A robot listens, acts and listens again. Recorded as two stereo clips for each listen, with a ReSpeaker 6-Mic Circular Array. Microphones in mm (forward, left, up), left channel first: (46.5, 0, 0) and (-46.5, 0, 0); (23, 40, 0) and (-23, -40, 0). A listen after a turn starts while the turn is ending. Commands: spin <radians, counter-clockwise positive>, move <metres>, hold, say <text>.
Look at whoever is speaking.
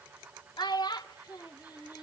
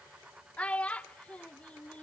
spin -0.26
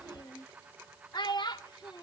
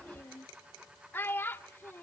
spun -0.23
say Found it: a child speaking, straight ahead.